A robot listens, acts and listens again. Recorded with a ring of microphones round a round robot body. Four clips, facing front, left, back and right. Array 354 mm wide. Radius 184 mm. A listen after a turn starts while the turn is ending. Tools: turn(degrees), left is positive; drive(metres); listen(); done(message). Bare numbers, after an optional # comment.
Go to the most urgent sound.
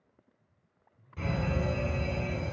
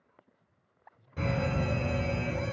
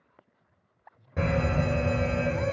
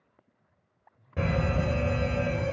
# The fire alarm: 145° right.
turn(-145)
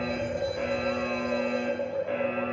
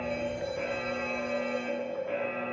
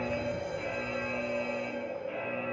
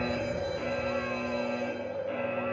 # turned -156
# The fire alarm is now 10° left.
turn(10)
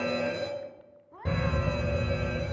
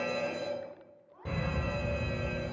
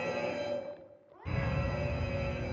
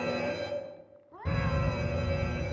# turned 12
drive(1.0)
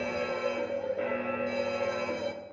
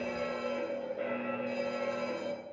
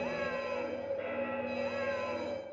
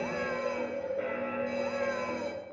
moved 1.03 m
drive(1.0)
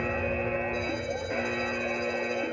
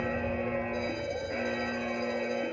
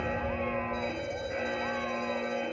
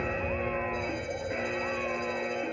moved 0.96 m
drive(1.0)
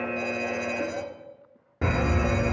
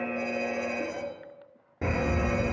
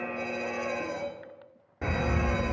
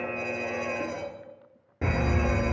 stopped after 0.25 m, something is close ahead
done("Arrived at the fire alarm, straight ahead.")